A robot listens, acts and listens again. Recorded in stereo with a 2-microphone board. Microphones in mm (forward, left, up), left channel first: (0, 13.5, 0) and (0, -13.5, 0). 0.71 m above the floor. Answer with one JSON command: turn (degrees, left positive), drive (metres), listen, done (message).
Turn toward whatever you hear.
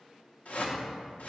{"turn": 60}
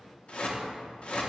{"turn": 50}
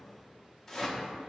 {"turn": 15}
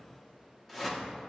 {"done": "Found it: a whoosh, straight ahead."}